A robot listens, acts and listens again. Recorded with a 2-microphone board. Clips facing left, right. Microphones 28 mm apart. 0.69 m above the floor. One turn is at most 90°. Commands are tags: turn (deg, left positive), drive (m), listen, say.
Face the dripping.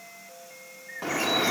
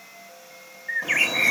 <turn deg="45"/>
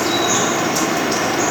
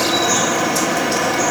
<turn deg="15"/>
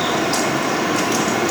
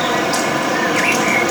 <say>Found it: dripping, straight ahead, 1 to 2 m away.</say>